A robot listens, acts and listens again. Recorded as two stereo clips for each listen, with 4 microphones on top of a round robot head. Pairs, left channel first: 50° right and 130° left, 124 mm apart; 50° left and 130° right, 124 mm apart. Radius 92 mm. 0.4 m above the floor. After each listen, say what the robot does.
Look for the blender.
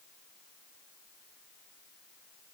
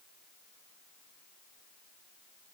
Keep listening.
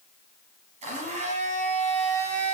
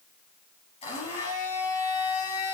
Turn 95° left.
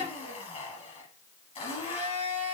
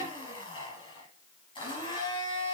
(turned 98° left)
Found it: a blender, straight ahead.